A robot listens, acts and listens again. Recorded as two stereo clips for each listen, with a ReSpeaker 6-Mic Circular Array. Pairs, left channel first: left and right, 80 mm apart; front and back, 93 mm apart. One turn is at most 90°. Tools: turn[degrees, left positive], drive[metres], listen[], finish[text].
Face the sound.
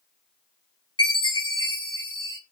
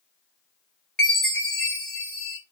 Thought: The chime: 80° left.
Action: turn[80]
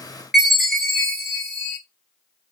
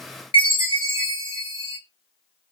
Action: finish[Found it: a chime, straight ahead, 2 to 4 m away.]